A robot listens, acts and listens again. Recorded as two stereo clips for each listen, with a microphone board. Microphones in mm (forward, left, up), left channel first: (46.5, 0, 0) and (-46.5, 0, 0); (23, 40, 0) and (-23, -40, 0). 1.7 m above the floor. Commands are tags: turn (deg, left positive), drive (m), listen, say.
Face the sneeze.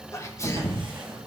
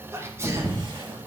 <turn deg="-60"/>
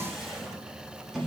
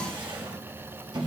<say>Facing where the sneeze came from. I can't hear it now.</say>